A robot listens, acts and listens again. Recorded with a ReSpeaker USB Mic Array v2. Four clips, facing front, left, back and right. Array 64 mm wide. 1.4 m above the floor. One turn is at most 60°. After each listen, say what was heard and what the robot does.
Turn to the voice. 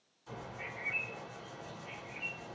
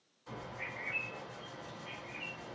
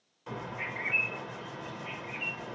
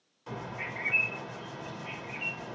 Keep listening.
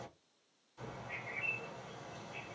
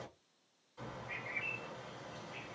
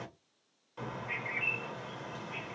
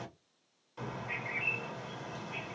Keep listening.
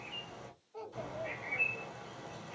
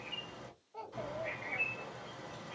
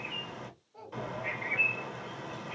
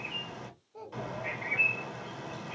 The child speaking: 60° left. Turn 60° left.
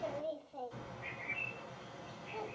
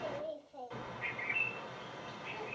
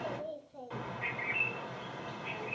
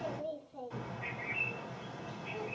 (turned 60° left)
The child speaking is now 15° left. Turn 15° left.
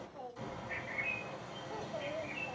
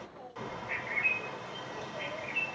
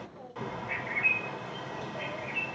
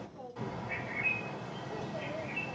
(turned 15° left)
Found it: a child speaking, straight ahead, 1 to 2 m away.